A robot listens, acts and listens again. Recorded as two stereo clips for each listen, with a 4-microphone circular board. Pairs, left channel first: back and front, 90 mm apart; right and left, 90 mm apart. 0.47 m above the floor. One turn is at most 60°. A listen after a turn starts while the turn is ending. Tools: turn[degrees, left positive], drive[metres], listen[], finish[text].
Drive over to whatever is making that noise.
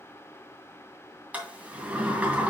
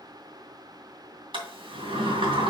Thought: The sliding door: 75° left.
Action: turn[60]
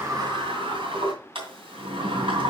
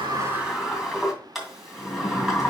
Action: drive[1.0]
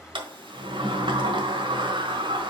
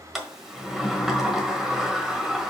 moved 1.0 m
Action: drive[1.0]
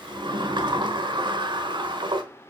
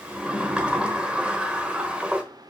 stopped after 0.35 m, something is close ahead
Thought: The sliding door is now 15° left.
Action: turn[15]
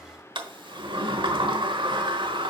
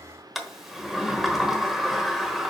Action: finish[I am next to the sliding door.]